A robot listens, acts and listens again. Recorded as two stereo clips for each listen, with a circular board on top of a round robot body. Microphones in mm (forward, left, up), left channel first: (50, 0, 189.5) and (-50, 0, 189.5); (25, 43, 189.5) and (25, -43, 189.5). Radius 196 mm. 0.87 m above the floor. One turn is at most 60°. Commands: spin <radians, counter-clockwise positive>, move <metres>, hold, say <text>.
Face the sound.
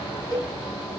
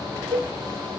spin -1.05
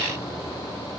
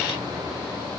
spin -0.52
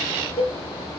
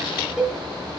say Found it: a cowbell, straight ahead.